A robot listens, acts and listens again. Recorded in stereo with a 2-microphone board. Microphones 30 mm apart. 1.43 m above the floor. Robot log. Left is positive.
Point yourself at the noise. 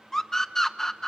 cmd yaw +30
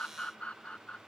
note: So it is at 135° left.
cmd yaw +135
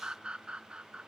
note: The scream is now 30° right.
cmd yaw -30
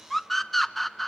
note: The scream is now 10° left.
cmd yaw +10
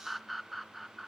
end: Found it: a scream, straight ahead, under 1 m away.